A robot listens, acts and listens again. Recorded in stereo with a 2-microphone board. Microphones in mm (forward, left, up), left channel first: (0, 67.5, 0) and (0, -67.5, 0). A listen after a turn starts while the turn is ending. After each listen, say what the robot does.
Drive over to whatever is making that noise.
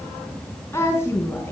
Turn 20° left.
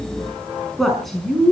Drive 1.0 m forward.
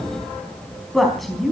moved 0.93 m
Drive 1.0 m forward.
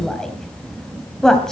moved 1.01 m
Drive 1.0 m forward.
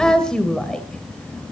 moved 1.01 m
Drive 1.0 m forward.
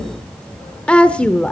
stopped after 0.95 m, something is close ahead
Turn 15° left.
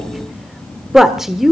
I am next to the woman speaking.